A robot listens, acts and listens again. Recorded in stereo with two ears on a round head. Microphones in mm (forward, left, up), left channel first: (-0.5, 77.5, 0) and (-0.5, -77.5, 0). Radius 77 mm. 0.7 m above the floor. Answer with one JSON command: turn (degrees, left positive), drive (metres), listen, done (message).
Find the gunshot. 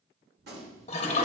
{"turn": -65}
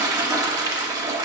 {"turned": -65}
{"listen": true}
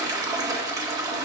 {"done": "I heard a gunshot, but can't make it out now. It was about straight ahead or 50° right."}